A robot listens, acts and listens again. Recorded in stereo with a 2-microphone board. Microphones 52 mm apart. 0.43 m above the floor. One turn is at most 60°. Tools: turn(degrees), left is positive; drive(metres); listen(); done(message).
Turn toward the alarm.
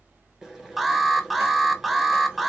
turn(degrees=-30)
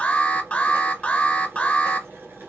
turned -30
turn(degrees=25)
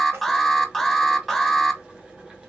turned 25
done("Found it: an alarm, straight ahead, under 1 m away.")